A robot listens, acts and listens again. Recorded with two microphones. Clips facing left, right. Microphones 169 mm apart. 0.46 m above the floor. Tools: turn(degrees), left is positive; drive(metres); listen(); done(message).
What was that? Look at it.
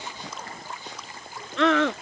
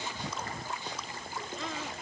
turn(degrees=90)
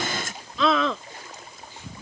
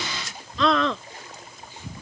done("Found it: a scream, straight ahead.")